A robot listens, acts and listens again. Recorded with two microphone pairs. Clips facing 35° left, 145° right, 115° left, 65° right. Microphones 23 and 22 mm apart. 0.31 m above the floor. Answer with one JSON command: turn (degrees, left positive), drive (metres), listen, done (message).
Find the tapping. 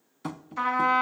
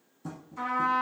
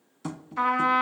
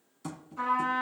{"turn": 40}
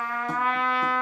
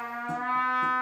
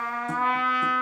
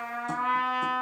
{"listen": true}
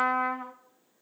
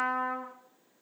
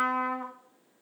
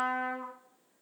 {"listen": true}
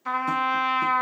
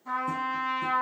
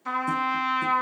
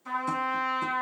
{"done": "I heard tapping from this way, but can't make it out now."}